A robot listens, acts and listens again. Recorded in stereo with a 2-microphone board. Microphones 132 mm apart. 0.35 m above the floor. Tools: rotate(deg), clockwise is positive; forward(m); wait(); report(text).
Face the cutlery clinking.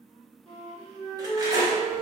rotate(30)
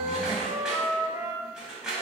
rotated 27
report("Facing the cutlery clinking, 1 to 2 m away.")